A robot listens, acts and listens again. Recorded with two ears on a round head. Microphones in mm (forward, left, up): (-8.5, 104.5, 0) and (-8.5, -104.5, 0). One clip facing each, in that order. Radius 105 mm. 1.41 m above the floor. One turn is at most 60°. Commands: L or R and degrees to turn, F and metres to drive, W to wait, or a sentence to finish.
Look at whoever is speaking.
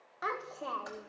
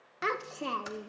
R40
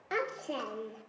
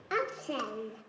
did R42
Facing the child speaking.